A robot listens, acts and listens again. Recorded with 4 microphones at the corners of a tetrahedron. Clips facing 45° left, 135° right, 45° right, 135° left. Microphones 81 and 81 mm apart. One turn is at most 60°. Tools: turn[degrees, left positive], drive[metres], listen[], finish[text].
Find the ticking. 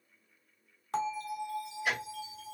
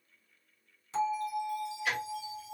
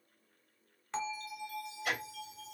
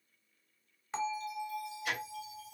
Thought: The ticking: 25° right.
Action: turn[-25]
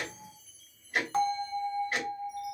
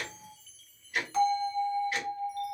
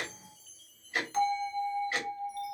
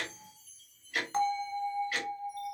Thought: The ticking is now 10° left.
Action: turn[10]
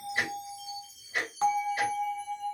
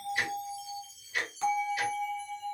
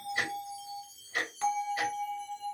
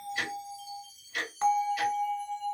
Action: finish[Facing the ticking, 1 to 2 m away.]